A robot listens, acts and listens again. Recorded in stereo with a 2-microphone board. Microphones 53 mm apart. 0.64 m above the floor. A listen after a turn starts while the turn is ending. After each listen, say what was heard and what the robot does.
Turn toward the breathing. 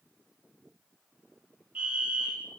Keep listening.
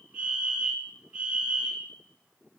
Keep listening.
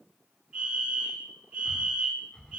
The breathing: about 20° left or 160° left. Turn 20° left.
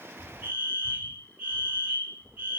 So it is at 140° left. Turn 140° left.
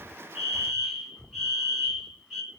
Facing the breathing, 2 to 4 m away.